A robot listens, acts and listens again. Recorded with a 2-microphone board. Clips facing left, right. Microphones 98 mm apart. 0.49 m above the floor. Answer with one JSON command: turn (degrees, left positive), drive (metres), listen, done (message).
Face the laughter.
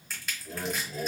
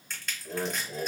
{"turn": -35}
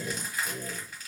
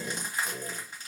{"turn": -10}
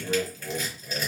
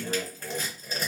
{"done": "Found it: laughter, straight ahead, 1 to 2 m away."}